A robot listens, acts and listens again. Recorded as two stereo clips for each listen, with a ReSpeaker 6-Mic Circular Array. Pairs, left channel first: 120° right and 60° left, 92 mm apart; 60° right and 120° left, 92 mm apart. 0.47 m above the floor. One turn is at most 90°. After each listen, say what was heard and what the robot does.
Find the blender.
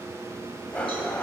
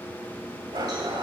The blender: 165° left. Turn 90° left.
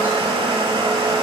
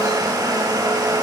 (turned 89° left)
The blender is now 75° left. Turn 75° left.
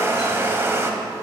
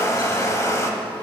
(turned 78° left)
Found it: a blender, straight ahead, under 1 m away.